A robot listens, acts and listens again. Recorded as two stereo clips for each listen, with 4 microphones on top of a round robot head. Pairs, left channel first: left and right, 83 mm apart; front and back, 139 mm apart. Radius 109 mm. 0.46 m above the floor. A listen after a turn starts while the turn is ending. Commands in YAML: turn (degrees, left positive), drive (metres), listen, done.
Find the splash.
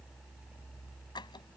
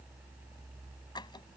listen: true
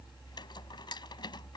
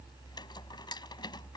listen: true
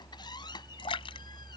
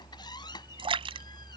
turn: 125
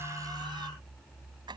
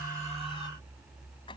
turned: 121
done: "Facing where the splash came from. I can't hear it now."